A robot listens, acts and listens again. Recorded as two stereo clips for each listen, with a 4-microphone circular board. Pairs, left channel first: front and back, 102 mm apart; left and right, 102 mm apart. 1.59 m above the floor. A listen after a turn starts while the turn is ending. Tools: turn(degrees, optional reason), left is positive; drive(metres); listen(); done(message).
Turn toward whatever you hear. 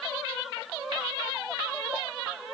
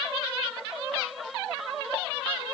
listen()
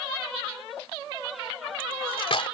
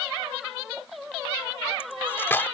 turn(degrees=25, reason="The cutlery clinking: 25° left.")
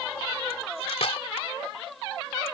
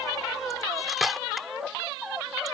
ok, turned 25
done("Found it: cutlery clinking, straight ahead.")